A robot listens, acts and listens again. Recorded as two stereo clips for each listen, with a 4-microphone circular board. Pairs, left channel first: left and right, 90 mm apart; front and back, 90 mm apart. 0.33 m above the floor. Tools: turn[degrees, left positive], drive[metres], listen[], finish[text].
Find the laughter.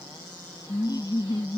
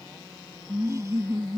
Thought: The laughter: 120° left.
Action: turn[120]
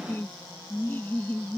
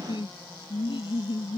Thought: The laughter is now 20° left.
Action: turn[20]
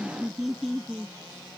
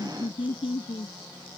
Action: finish[Found it: laughter, straight ahead.]